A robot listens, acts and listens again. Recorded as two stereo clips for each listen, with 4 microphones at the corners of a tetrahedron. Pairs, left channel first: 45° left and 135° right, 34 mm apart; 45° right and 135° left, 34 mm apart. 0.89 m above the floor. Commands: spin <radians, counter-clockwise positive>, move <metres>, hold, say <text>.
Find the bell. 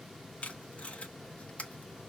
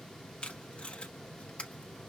hold
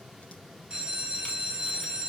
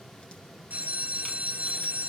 spin 2.79
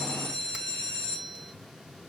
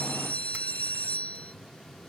spin -0.52
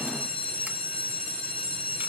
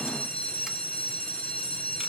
say Found it: a bell, straight ahead, 2 to 4 m away.